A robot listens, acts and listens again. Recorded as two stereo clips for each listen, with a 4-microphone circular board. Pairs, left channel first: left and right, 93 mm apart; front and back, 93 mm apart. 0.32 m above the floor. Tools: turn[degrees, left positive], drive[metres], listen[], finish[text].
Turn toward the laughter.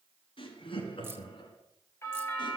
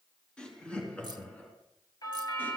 Thought: The laughter: 75° left.
Action: turn[75]
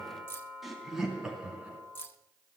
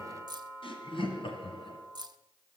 Thought: The laughter is now 10° right.
Action: turn[-10]
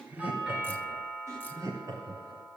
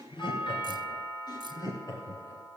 Thought: The laughter is now 45° right.
Action: turn[-45]
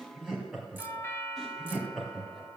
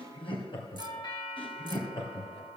Action: finish[Found it: laughter, straight ahead.]